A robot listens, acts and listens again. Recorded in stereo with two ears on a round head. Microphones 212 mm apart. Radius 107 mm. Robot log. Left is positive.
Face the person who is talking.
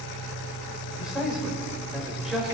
cmd yaw -30
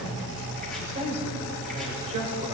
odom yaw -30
note: So it is at 145° right.
cmd yaw -145
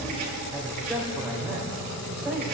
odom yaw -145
end: Facing the man speaking.